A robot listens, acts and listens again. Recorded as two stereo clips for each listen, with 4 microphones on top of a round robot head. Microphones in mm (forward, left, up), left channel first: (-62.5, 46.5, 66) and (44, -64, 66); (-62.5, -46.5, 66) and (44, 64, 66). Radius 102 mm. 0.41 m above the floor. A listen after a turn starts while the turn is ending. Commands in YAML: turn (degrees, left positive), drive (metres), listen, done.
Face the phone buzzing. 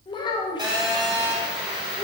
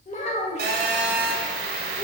turn: 20
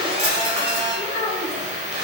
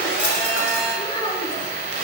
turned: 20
done: "Facing the phone buzzing."